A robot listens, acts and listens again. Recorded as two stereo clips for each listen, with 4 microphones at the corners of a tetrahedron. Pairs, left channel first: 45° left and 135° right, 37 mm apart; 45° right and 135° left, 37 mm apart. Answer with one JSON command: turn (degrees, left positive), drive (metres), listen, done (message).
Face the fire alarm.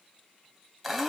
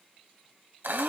{"listen": true}
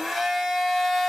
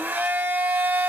{"listen": true}
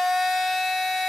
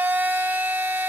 {"done": "I can't make out a fire alarm, only a blender."}